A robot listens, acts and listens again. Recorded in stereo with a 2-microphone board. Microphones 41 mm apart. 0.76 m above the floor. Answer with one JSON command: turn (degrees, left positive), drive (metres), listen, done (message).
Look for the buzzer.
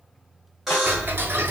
{"turn": 30}
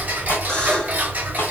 {"listen": true}
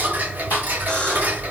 {"listen": true}
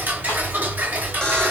{"done": "I heard a buzzer, but can't make it out now. It was about 30° right or 150° left."}